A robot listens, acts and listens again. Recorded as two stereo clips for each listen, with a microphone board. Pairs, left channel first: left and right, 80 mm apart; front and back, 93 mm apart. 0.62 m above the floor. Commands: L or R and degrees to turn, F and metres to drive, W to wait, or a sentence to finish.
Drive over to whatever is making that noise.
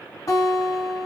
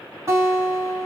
L130
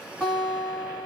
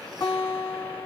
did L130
L20
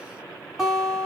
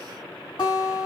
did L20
F1.0
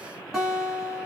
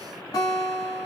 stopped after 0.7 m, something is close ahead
R10
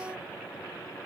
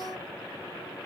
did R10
W
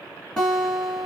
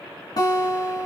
I am next to the guitar.